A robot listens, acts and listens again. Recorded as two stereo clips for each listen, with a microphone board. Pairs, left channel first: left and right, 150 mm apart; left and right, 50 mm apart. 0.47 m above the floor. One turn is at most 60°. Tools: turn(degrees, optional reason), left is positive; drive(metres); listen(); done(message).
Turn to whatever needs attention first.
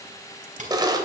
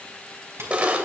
listen()
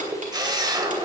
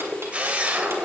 listen()
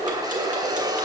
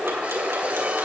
done("I can't make out anything urgent, only ticking and a camera shutter.")